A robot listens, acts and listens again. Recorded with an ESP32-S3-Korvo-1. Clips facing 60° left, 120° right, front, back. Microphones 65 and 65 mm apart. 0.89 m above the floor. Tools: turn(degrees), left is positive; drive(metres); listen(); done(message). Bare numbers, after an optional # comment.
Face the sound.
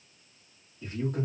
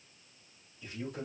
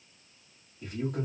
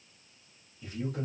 # The man speaking: 25° left.
turn(25)
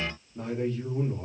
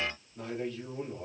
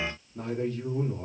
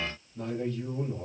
done("Facing the man speaking.")